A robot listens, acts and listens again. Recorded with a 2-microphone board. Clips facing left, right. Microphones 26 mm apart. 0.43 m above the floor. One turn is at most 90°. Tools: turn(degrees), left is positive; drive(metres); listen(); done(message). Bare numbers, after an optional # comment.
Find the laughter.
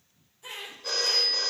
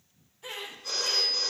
# The laughter: about 20° right or 160° right.
turn(-20)
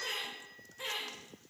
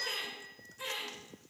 # So it is at 20° left.
turn(20)
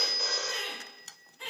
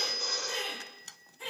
# The laughter is now 25° left.
turn(25)
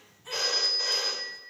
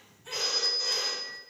done("Found it: laughter, straight ahead.")